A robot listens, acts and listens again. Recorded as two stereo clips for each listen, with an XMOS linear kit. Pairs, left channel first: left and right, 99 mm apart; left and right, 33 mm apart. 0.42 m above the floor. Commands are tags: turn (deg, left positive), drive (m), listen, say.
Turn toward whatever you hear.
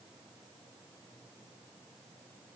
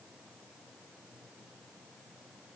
<listen/>
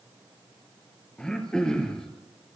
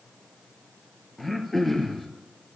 <turn deg="30"/>
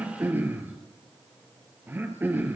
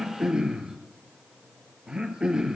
<turn deg="-20"/>
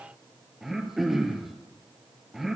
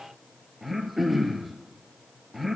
<say>Found it: throat clearing, straight ahead.</say>